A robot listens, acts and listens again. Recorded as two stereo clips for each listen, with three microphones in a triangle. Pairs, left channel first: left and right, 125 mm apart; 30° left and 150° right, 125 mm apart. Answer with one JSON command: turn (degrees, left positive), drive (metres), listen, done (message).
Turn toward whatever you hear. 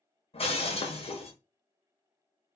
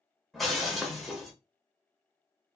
{"turn": 120}
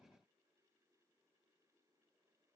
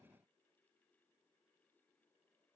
{"done": "I heard breaking glass from this way, but can't make it out now."}